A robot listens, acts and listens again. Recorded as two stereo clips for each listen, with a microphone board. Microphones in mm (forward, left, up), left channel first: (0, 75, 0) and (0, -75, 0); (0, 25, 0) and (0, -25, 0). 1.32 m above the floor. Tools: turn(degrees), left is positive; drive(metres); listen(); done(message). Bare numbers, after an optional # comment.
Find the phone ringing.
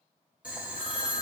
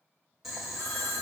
# The phone ringing: about 35° left or 145° left.
turn(35)
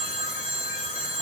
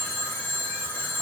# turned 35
# So it is at 110° left.
turn(110)
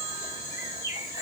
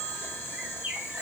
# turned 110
listen()
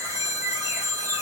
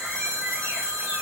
# The phone ringing is now 20° left.
turn(20)
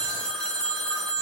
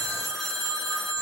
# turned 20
done("Found it: a phone ringing, straight ahead, under 1 m away.")